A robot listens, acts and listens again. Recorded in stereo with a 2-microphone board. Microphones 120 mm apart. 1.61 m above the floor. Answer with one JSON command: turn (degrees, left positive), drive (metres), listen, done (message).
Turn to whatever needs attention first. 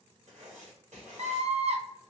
{"turn": -60}
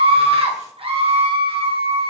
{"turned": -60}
{"turn": -55}
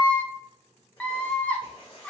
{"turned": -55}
{"turn": 10}
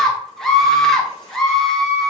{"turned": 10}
{"done": "Found it: a scream, straight ahead, under 1 m away."}